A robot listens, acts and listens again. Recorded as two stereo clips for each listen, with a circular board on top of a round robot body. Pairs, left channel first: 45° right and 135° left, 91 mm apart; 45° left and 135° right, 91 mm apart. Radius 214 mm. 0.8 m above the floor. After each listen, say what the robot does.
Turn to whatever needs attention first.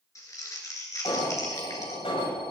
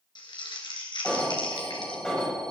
Turn 35° right.
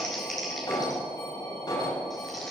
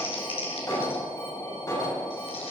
Facing the alarm, over 4 m away.